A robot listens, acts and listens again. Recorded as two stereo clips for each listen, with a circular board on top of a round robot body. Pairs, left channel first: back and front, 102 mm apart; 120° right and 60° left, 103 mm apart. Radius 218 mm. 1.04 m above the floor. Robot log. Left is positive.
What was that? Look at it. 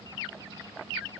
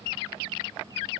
cmd idle
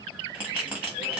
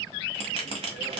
note: The bell: 80° left.
cmd yaw +80
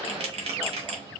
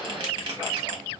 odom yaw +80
note: The bell is now 15° left.
cmd yaw +15
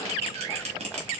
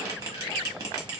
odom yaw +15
end: Facing the bell.